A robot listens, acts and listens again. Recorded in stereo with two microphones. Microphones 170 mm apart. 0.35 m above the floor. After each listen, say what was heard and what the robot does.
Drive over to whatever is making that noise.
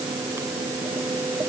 Keep listening.
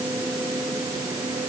Keep listening.
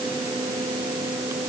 I can't make out anything.